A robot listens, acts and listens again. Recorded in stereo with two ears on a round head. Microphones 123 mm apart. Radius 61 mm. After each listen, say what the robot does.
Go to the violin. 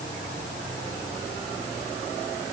Keep listening.
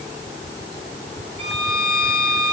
Turn 35° left.
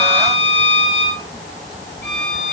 Drive 1.0 m forward.
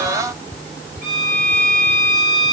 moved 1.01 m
Turn 10° left.
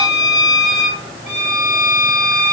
Drive 1.0 m forward.
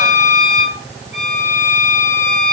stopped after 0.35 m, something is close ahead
I am next to the violin.